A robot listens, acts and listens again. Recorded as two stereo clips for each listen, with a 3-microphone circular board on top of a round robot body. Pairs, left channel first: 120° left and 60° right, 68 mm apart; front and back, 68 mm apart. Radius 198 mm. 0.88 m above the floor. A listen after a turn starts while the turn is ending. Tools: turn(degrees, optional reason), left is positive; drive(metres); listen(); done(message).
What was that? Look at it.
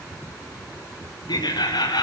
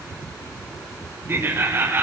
turn(degrees=125, reason="The laughter: 125° left.")
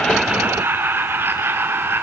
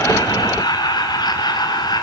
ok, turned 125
done("Found it: laughter, straight ahead, 2 to 4 m away.")